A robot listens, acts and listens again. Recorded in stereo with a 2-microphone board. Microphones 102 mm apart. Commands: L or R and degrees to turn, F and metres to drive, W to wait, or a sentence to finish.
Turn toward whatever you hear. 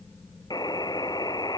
L45
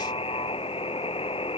L90
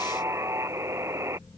R30
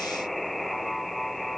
Found it: a buzzer, straight ahead.